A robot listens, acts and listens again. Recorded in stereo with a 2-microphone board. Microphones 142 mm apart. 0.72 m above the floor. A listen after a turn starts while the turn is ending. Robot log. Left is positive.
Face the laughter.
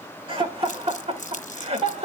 note: The laughter: about 50° right or 130° right.
cmd yaw -50
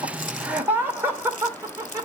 note: So it is at 20° right.
cmd yaw -20
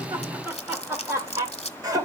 note: The laughter is now 25° right.
cmd yaw -25
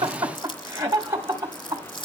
note: The laughter is now 20° right.
cmd yaw -20
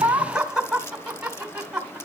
end: Facing the laughter.